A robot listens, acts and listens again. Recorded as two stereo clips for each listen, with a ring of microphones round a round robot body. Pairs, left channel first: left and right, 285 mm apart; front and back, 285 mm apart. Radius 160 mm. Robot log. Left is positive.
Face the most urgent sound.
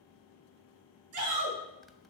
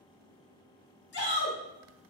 note: The shout: 55° right.
cmd yaw -55
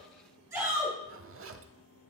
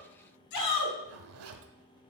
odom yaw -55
note: The shout is now 10° right.
cmd yaw -10
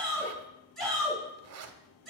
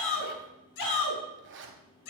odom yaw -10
end: Found it: a shout, straight ahead.